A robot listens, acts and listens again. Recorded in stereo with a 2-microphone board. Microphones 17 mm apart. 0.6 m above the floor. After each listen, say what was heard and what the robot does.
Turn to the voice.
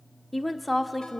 Turn 30° left.
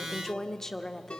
So it is at 145° left. Turn 145° left.
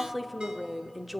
The woman speaking is now 15° right. Turn 15° right.
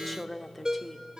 Found it: a woman speaking, straight ahead.